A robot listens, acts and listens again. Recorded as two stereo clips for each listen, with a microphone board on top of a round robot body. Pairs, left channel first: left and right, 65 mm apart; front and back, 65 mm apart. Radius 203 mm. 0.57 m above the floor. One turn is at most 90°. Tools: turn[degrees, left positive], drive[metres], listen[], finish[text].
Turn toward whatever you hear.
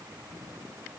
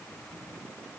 Action: listen[]
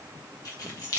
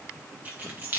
Thought: The keys jangling: 120° left.
Action: turn[90]
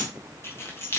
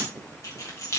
Thought: The keys jangling is now 40° left.
Action: turn[40]
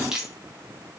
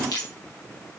Thought: The keys jangling is now 10° right.
Action: turn[-10]
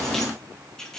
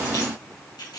Thought: The keys jangling is now 10° left.
Action: turn[10]
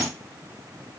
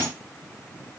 Action: listen[]
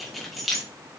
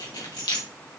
Action: finish[Found it: keys jangling, straight ahead, 2 to 4 m away.]